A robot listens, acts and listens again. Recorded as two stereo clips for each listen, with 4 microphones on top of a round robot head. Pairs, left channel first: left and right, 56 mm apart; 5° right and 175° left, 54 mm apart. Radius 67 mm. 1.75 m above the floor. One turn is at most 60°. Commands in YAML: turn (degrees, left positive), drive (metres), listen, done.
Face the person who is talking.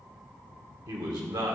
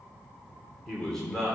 turn: -60
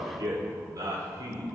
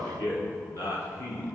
turn: -45
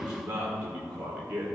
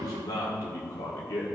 turn: -20
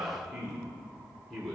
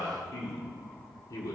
done: "Facing the man speaking, 1 to 2 m away."